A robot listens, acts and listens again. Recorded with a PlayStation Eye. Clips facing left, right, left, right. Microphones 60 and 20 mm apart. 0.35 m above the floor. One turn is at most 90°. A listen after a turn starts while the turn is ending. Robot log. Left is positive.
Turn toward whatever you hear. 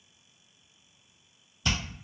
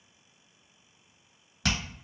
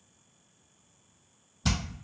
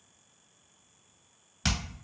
cmd yaw -90
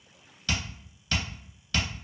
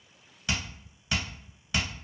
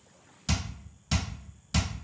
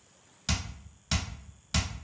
note: So it is at 20° right.
cmd yaw -20
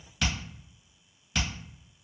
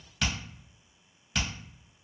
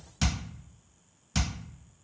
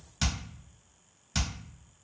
end: Facing the hammering, 1 to 2 m away.